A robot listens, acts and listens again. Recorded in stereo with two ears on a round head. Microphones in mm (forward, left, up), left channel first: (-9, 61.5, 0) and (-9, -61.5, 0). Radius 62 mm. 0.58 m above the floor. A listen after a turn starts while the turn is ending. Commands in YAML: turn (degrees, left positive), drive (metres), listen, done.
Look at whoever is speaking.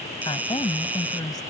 turn: 30
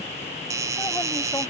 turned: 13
listen: true
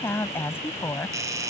turn: 15
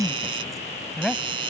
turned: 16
done: "Facing the woman speaking."